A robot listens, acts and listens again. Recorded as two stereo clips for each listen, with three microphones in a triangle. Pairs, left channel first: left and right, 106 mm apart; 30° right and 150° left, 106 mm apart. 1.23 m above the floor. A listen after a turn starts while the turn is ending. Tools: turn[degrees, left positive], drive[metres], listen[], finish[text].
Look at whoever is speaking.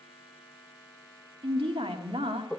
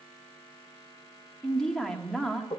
Thought: The woman speaking: 115° right.
Action: turn[-115]
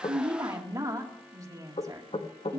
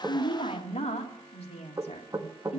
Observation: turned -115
Thought: The woman speaking is now 30° right.
Action: turn[-30]
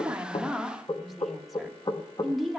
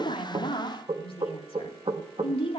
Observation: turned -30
Action: finish[Facing the woman speaking, 2 to 4 m away.]